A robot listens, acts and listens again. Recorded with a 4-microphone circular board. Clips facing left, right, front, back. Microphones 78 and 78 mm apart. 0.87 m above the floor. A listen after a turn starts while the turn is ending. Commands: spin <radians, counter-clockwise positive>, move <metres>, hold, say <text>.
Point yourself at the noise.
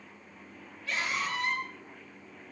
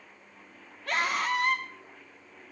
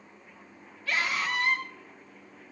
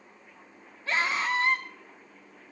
spin -2.09
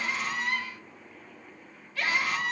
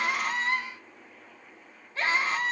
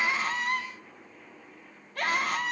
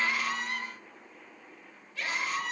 spin -0.52
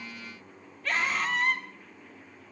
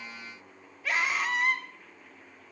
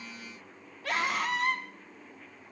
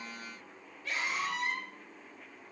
say Facing the scream, 2 to 4 m away.